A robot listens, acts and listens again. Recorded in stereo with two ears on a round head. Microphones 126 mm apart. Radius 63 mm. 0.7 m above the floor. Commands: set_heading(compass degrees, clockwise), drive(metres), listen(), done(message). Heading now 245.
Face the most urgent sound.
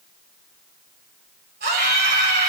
set_heading(335)
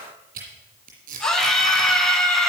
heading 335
done("Found it: a scream, straight ahead, over 4 m away.")